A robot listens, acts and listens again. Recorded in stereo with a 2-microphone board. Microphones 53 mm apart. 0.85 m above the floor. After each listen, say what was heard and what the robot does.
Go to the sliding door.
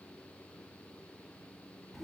Keep listening.
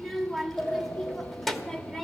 The sliding door: about 60° left or 120° left. Turn 60° left.
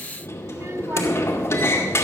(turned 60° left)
So it is at 60° left. Turn 60° left.
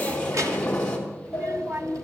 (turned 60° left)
The sliding door is now 20° left. Turn 20° left.
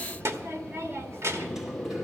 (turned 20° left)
The sliding door is now 10° right. Turn 10° right.
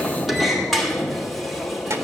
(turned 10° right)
Drive 1.0 m forward.
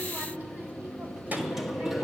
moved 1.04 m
Drive 1.0 m forward.
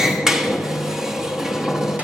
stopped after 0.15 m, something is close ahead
The sliding door is now 10° right. Turn 10° right.
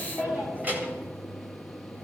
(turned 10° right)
I am next to the sliding door.